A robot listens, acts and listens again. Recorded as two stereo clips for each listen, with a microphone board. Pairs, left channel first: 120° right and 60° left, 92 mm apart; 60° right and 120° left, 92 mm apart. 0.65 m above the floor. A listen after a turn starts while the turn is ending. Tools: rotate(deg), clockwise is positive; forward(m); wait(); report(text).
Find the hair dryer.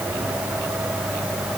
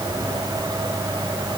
wait()
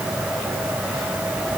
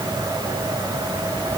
wait()
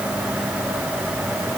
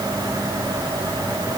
report("I can't make out a hair dryer.")